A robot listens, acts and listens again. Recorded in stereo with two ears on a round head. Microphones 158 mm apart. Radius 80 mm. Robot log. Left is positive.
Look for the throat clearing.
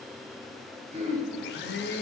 note: The throat clearing: about 40° right or 140° right.
cmd yaw -40
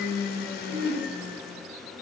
note: So it is at 100° right.
cmd yaw -100
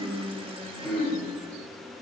end: Facing the throat clearing, 2 to 4 m away.